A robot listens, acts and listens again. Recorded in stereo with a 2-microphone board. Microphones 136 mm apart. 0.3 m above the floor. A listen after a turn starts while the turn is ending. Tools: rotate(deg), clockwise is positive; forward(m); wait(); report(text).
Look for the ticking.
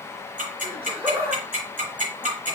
rotate(75)
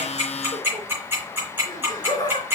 rotate(15)
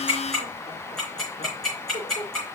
report("Found it: ticking, straight ahead.")